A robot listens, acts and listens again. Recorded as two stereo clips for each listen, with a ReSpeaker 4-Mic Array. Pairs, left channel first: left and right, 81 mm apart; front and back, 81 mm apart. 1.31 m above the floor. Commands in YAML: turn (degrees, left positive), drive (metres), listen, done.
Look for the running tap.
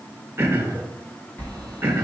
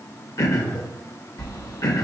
listen: true
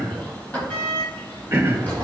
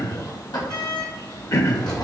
listen: true
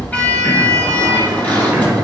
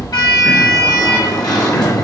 done: "I can't make out a running tap to turn to."